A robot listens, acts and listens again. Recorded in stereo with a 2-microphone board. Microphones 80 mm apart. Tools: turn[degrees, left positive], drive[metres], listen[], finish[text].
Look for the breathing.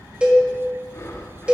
Thought: The breathing: about 35° left or 145° left.
Action: turn[35]
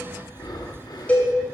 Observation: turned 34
Thought: So it is at 105° left.
Action: turn[105]
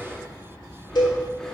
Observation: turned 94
Thought: Nothing new. It was at 10° left.
Action: turn[10]
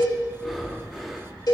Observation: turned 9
Action: finish[Found it: breathing, straight ahead.]